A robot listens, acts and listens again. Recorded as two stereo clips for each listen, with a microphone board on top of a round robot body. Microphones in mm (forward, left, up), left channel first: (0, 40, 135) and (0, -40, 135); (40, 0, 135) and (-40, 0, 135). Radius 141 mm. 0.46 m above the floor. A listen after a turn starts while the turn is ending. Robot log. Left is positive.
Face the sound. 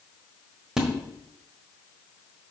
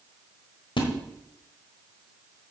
end: Facing the splash, 1 to 2 m away.